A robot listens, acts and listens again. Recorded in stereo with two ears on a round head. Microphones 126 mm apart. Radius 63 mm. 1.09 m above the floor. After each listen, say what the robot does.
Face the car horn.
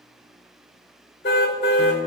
Turn 90° left.
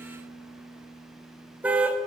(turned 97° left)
Turn 10° right.
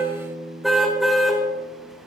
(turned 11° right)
Facing the car horn.